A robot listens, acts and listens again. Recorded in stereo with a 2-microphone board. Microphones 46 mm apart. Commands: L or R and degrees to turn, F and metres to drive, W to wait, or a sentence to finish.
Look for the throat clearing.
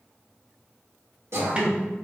R75
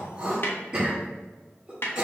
R25
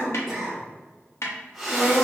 Found it: throat clearing, straight ahead, 1 to 2 m away.